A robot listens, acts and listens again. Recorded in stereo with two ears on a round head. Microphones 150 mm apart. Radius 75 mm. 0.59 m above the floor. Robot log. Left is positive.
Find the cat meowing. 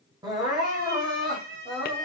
note: The cat meowing: about 55° right or 125° right.
cmd yaw -55
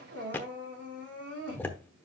cmd idle
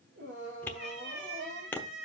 note: So it is at 75° right.
cmd yaw -75
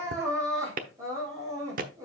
cmd idle
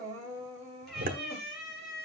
end: Found it: a cat meowing, straight ahead, over 4 m away.